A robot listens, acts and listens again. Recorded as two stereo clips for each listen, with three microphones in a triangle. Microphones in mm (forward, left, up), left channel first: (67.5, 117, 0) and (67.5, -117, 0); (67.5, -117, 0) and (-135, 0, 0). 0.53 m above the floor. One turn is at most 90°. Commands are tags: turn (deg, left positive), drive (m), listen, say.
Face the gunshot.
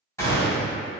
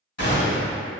<turn deg="10"/>
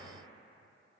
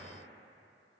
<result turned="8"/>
<say>I heard a gunshot from this way, but can't make it out now.</say>